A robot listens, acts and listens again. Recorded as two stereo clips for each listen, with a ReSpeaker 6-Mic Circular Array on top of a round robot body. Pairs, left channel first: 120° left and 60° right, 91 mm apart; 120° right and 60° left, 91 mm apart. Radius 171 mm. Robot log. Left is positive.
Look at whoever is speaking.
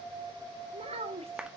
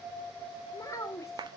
note: The child speaking: 60° right.
cmd yaw -60
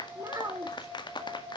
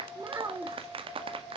end: Found it: a child speaking, straight ahead.